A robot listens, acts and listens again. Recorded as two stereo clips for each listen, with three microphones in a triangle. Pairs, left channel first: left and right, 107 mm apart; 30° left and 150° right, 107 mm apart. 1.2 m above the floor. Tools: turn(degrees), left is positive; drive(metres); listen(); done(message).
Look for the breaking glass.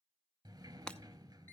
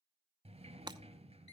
turn(degrees=170)
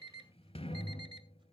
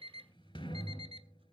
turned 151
turn(degrees=20)
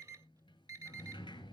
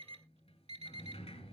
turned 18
done("I heard breaking glass from this way, but can't make it out now.")